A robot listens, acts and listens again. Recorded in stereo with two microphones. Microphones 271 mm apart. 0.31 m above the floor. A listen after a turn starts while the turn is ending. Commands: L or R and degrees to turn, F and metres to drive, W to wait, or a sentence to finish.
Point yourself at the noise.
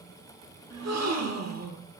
R75
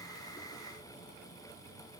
W
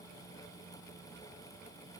I heard a gasp, but can't make it out now. It was about straight ahead or 30° right.